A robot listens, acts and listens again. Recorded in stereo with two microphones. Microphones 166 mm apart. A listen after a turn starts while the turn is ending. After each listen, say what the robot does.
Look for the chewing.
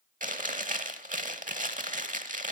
Turn 50° right.
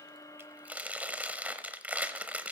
Turn 10° right.
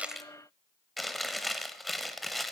Found it: chewing, straight ahead.